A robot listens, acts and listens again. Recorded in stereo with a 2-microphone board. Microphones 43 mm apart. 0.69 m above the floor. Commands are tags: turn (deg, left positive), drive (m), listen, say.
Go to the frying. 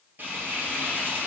<turn deg="-50"/>
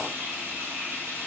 <turn deg="-80"/>
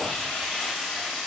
<drive m="1.0"/>
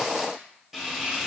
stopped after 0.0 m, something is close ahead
<say>Something is in my way. I am facing the frying but have not reached it.</say>